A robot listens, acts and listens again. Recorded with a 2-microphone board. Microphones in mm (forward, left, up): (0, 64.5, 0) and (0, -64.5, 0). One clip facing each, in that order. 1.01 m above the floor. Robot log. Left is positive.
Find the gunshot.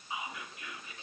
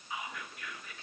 cmd idle
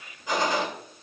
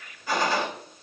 note: The gunshot: about 20° left or 160° left.
cmd yaw +20
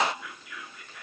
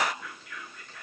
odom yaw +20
cmd idle
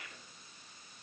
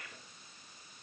end: I heard a gunshot, but can't make it out now. It was about straight ahead or 140° left.